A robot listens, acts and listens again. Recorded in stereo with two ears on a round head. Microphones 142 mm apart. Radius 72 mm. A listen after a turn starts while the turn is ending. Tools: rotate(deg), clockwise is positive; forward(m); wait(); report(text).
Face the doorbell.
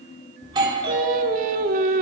rotate(30)
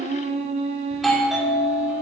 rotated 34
report("Found it: a doorbell, straight ahead.")